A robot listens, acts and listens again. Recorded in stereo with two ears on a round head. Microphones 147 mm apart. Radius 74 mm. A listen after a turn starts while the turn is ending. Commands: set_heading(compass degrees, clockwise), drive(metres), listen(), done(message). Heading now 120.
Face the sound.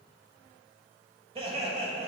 set_heading(160)
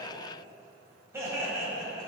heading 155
set_heading(175)
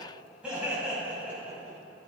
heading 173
set_heading(183)
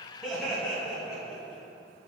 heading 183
done("Found it: laughter, straight ahead.")